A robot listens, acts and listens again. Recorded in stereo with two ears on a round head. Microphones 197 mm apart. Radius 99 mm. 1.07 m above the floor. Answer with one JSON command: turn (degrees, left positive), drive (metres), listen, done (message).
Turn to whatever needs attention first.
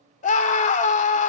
{"turn": 35}
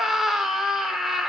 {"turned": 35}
{"done": "Facing the scream."}